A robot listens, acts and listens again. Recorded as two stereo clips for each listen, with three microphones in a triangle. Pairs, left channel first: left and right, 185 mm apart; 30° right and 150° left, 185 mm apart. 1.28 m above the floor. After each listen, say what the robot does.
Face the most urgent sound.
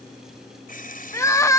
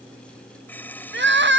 Turn 165° left.
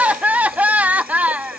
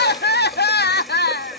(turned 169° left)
Found it: crying, straight ahead.